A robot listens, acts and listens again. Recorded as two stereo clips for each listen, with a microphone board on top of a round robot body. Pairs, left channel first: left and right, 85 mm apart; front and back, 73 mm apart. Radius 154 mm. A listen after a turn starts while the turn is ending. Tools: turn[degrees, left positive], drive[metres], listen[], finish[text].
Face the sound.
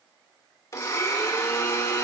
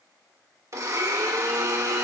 Thought: The blender: 140° left.
Action: turn[140]
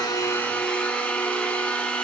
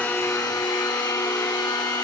Thought: The blender is now 20° left.
Action: turn[20]
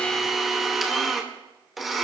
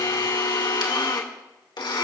Action: finish[Found it: a blender, straight ahead, 2 to 4 m away.]